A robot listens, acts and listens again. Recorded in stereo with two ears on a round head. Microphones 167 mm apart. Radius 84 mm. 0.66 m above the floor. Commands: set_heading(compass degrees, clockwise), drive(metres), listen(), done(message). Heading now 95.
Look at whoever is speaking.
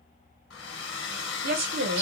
set_heading(150)
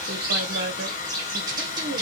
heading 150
set_heading(210)
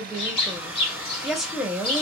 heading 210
done("Facing the woman speaking, 1 to 2 m away.")